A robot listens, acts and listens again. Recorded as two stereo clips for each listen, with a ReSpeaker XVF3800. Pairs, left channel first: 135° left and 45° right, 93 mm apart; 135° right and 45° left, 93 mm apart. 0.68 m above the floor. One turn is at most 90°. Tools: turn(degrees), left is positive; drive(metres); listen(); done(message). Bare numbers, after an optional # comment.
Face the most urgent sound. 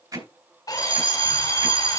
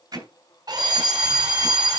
# The fire alarm: 40° right.
turn(-40)
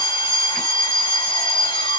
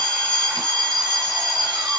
done("Facing the fire alarm, over 4 m away.")